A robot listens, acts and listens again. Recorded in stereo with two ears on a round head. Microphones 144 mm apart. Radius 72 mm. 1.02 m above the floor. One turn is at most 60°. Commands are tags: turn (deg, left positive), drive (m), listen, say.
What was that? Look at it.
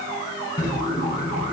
<turn deg="25"/>
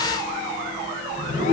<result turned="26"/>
<turn deg="60"/>
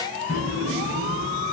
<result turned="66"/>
<turn deg="60"/>
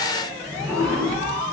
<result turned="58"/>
<say>Found it: a drawer, straight ahead.</say>